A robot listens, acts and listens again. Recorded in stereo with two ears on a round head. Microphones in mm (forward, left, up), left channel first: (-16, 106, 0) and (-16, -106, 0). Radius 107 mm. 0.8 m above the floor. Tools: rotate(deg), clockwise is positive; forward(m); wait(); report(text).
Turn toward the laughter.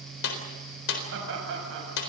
rotate(55)
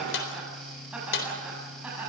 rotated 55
report("Found it: laughter, straight ahead.")